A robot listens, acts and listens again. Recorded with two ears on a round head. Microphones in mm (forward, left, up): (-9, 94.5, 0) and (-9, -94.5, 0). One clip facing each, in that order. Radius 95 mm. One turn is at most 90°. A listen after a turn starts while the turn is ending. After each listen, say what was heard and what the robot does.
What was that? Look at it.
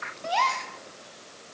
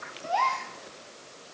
The gasp: about 45° left or 135° left. Turn 45° left.
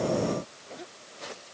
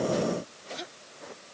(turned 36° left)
Keep listening.
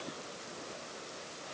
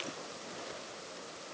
I heard a gasp, but can't make it out now. It was about 10° left or 100° left.